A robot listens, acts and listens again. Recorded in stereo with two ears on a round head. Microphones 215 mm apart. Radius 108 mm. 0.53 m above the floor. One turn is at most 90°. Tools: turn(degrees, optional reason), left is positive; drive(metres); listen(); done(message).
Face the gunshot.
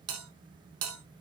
listen()
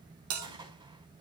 turn(degrees=-20, reason="The gunshot: about 20° right or 160° right.")
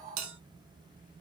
listen()
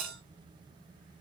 done("I heard a gunshot, but can't make it out now. It was about straight ahead or 140° right.")